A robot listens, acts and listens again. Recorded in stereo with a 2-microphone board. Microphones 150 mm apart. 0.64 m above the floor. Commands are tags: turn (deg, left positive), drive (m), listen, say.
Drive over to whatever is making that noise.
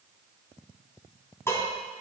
<turn deg="15"/>
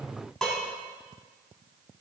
<drive m="1.0"/>
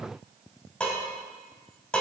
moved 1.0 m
<drive m="1.0"/>
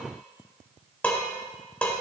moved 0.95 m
<turn deg="10"/>
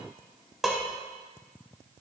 <drive m="1.0"/>
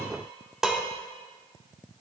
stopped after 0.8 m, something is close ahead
<say>I am next to the dishes clattering.</say>